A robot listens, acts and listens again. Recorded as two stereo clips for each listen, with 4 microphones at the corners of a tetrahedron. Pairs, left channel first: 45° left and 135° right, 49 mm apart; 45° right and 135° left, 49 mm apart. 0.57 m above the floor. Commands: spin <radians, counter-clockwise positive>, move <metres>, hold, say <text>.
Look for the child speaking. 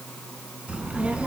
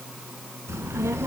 spin 2.71
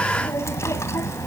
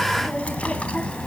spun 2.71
spin 0.35
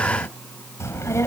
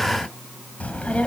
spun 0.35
spin 0.35
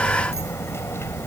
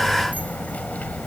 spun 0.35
spin 0.26
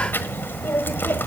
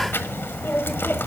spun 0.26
say Facing the child speaking, 1 to 2 m away.